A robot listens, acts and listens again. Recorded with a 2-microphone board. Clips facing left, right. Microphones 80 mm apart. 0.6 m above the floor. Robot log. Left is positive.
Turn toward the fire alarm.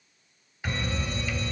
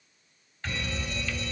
note: The fire alarm: about 45° left or 135° left.
cmd yaw +45
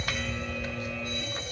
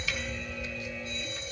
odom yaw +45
note: So it is at 85° left.
cmd yaw +85
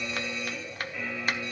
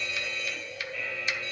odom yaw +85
note: The fire alarm is now 20° left.
cmd yaw +20
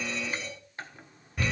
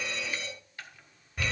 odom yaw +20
end: Found it: a fire alarm, straight ahead.